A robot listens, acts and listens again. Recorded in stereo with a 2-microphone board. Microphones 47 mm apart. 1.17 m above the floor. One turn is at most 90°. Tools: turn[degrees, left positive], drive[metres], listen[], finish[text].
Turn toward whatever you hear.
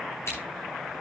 Thought: The scissors: about 70° left or 110° left.
Action: turn[70]
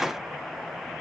Action: listen[]
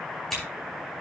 Action: finish[Found it: scissors, straight ahead, over 4 m away.]